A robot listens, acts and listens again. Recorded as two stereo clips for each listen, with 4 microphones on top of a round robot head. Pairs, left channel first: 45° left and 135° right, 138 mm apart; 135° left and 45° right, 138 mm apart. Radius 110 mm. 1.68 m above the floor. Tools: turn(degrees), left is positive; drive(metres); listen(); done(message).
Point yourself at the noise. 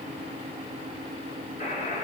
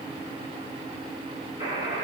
turn(degrees=10)
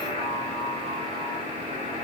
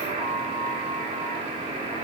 done("Found it: a buzzer, straight ahead.")